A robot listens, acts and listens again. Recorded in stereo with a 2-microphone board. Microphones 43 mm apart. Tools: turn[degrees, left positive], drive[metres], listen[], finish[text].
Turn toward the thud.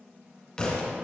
Thought: The thud: about 20° left or 160° left.
Action: turn[20]
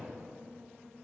Action: listen[]
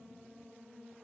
Action: finish[I heard a thud, but can't make it out now. It was about straight ahead or 140° left.]